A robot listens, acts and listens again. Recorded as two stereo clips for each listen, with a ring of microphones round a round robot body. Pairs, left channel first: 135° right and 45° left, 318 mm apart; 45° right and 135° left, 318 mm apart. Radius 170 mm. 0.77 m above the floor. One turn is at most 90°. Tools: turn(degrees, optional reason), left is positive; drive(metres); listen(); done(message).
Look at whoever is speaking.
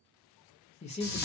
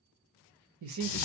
turn(degrees=90, reason="The man speaking: 155° left.")
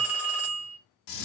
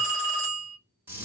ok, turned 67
turn(degrees=90, reason="Nothing new. It was at 90° left.")
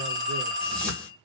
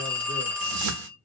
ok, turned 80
turn(degrees=10, reason="Nothing new. It was at 10° left.")
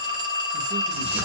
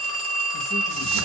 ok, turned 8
done("I heard a man speaking from this way, but can't make it out now.")